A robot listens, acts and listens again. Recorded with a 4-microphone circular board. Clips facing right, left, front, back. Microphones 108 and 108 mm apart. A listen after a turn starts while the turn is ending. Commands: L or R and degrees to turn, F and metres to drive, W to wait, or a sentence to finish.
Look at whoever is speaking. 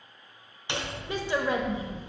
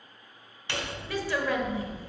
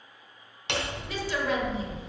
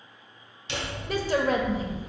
R155
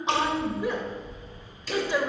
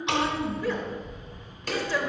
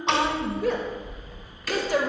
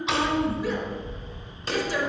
R15
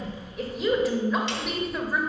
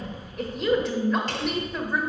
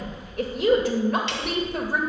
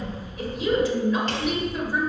Found it: a woman speaking, straight ahead.